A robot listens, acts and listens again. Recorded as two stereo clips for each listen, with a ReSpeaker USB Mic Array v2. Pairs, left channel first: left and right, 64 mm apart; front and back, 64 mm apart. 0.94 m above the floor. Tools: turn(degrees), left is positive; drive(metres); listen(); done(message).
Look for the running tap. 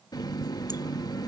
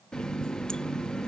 turn(degrees=80)
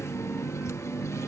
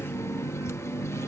turn(degrees=45)
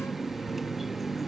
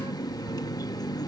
done("Found it: a running tap, straight ahead.")